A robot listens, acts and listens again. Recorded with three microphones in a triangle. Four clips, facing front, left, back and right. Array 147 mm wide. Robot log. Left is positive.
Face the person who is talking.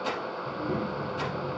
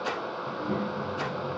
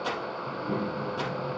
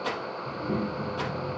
note: The child speaking: 60° right.
cmd yaw -60
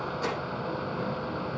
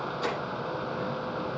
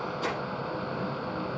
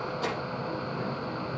note: The child speaking is now 20° right.
cmd yaw -20
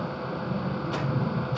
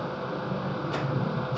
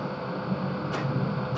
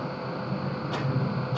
end: Facing the child speaking, 2 to 4 m away.